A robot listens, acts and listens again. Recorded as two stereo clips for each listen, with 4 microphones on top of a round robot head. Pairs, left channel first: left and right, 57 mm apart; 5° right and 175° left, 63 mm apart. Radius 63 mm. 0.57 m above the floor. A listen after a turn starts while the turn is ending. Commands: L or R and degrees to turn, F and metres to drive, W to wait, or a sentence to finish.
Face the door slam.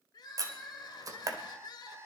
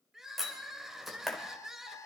R100
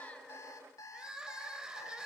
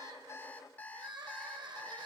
I heard a door slam from this way, but can't make it out now.